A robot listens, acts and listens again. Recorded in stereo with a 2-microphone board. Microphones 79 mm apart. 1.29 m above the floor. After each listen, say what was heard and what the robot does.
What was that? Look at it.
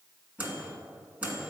The microwave: about 20° right or 160° right. Turn 20° right.
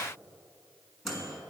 Found it: a microwave, straight ahead.